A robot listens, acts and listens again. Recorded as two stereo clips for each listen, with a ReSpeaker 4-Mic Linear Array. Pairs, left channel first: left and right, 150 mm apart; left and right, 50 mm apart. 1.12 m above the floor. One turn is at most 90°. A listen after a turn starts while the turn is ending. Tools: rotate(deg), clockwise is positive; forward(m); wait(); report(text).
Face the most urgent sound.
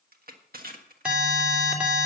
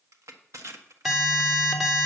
rotate(30)
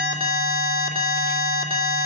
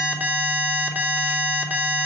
rotate(90)
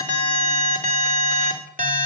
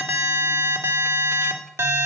rotate(65)
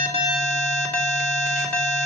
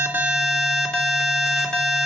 report("Found it: an alarm, straight ahead, 2 to 4 m away.")